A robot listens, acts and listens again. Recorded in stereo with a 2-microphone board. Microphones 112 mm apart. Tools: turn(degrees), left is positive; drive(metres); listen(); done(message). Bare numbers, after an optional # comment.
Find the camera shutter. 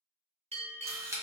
# The camera shutter: about 25° right or 155° right.
turn(-25)
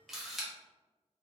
done("Facing the camera shutter, under 1 m away.")